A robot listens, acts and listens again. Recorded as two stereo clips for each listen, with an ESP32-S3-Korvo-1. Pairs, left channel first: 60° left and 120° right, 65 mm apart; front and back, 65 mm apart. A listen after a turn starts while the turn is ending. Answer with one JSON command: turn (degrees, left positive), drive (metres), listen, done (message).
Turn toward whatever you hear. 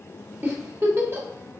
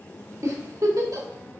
{"turn": -160}
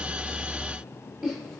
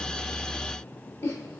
{"turn": -30}
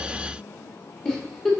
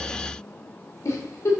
{"turn": -20}
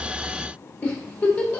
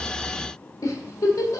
{"done": "Found it: a giggle, straight ahead, 1 to 2 m away."}